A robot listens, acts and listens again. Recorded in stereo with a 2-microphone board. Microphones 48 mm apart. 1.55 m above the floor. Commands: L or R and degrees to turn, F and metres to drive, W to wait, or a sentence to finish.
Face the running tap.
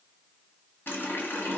L55
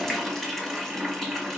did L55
Facing the running tap, 1 to 2 m away.